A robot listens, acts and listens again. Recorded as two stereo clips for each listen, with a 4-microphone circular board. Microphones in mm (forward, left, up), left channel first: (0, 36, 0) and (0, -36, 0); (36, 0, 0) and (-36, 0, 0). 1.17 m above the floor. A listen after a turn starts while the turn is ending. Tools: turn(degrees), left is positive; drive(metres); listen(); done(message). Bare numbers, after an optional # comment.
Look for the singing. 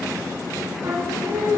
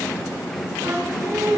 # The singing: 140° right.
turn(-140)
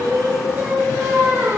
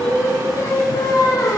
# The singing is now 30° right.
turn(-30)
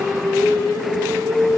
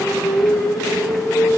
done("Found it: singing, straight ahead.")